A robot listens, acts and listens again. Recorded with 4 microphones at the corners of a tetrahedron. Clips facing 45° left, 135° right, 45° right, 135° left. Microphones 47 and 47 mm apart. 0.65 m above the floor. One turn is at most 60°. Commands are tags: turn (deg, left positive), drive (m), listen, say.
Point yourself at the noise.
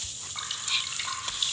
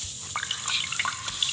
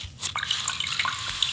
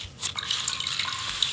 <turn deg="-60"/>
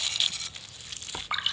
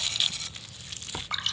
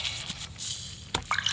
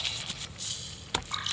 <turn deg="-30"/>
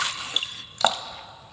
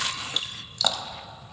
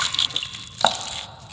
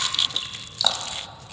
<say>Found it: dripping, straight ahead.</say>